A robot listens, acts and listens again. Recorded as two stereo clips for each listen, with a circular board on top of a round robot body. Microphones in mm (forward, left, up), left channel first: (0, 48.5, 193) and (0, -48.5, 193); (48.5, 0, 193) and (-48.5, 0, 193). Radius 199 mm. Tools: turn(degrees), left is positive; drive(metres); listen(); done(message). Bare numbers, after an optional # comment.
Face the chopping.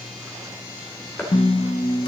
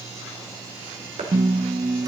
# The chopping: 160° left.
turn(160)
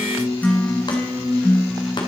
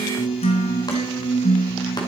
listen()
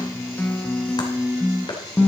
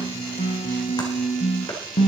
# The chopping is now 45° left.
turn(45)
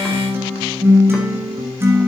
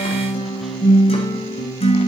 listen()
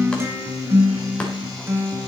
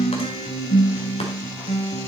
listen()
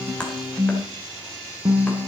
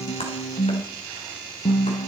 # The chopping is now 10° left.
turn(10)
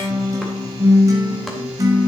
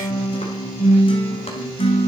listen()
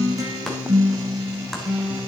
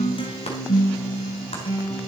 listen()
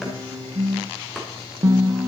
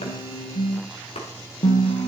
done("Found it: chopping, straight ahead.")